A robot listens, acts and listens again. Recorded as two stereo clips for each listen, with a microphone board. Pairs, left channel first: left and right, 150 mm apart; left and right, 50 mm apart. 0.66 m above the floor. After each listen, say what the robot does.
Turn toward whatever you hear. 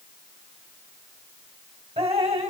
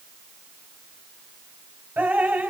Turn 45° right.
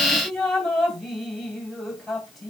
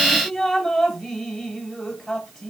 Found it: dripping, straight ahead.